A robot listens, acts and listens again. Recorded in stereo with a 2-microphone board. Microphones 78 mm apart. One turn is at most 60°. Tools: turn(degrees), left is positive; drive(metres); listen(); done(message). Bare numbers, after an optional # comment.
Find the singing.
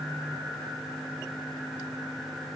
listen()
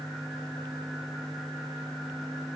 listen()
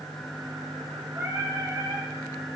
# The singing: about 35° right or 145° right.
turn(-35)
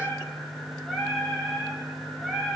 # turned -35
done("Found it: singing, straight ahead, 2 to 4 m away.")